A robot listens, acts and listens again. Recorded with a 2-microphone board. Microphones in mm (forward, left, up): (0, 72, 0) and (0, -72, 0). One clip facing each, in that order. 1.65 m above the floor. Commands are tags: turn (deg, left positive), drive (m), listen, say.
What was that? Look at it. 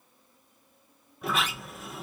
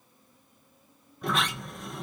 <turn deg="30"/>
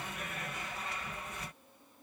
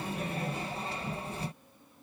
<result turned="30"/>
<turn deg="-30"/>
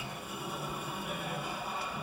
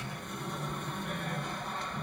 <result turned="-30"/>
<turn deg="10"/>
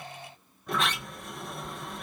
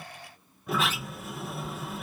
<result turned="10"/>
<say>Found it: a sliding door, straight ahead.</say>